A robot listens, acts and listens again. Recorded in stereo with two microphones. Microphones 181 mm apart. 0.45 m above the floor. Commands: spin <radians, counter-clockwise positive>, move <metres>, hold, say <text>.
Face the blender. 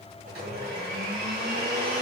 spin -1.13
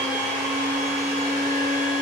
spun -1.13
spin -0.17
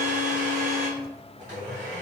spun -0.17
say Facing the blender.